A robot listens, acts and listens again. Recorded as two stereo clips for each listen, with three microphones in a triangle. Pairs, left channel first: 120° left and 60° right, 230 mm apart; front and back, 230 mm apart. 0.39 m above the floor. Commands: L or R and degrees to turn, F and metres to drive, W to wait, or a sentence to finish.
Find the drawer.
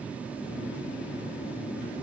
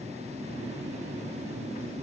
W
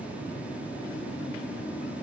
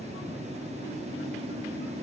W
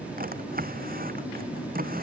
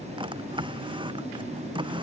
R110
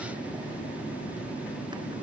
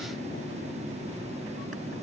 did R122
L10
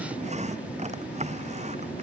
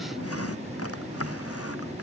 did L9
Found it: a drawer, straight ahead.